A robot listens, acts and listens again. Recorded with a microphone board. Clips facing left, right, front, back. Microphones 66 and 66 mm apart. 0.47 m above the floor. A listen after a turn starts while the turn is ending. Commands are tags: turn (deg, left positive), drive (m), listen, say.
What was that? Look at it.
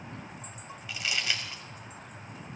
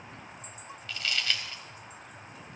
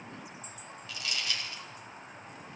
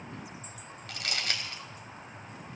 <turn deg="165"/>
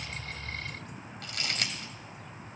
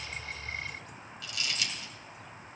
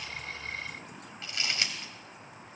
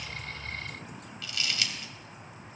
<turn deg="55"/>
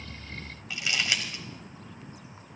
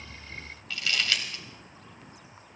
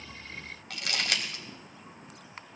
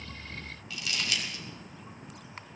<turn deg="15"/>
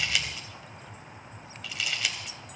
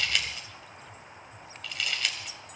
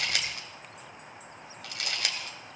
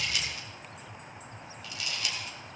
<say>Found it: crumpling, straight ahead, 2 to 4 m away.</say>